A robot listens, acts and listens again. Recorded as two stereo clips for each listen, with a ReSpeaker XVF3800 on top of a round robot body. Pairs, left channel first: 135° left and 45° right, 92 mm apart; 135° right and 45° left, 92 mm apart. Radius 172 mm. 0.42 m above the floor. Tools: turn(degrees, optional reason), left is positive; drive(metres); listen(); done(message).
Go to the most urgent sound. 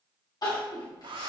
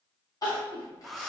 turn(degrees=175, reason="The crying: 175° left.")
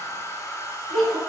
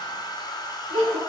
turn(degrees=50, reason="The crying is now 50° left.")
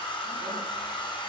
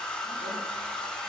listen()
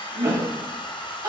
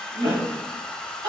turn(degrees=10, reason="The crying is now 10° left.")
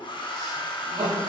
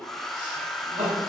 drive(metres=1.0)
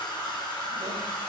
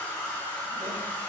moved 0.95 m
listen()
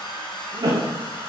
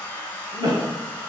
drive(metres=1.0)
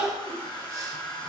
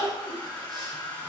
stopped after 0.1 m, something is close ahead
done("Arrived at the crying, straight ahead.")